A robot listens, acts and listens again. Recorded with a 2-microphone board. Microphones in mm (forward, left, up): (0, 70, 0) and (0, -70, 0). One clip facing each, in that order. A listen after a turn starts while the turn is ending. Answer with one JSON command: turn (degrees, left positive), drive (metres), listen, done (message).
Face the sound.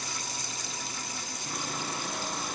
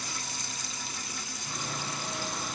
{"turn": 60}
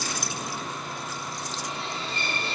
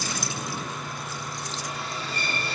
{"turn": 30}
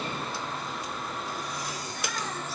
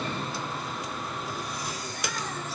{"done": "Found it: sawing, straight ahead."}